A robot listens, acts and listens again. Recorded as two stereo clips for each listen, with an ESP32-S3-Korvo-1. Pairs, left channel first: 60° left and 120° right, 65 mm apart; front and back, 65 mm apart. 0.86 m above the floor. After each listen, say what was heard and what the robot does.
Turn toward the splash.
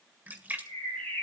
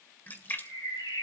The splash: 55° right. Turn 55° right.
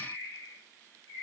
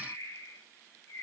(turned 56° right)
Facing where the splash came from. I can't hear it now.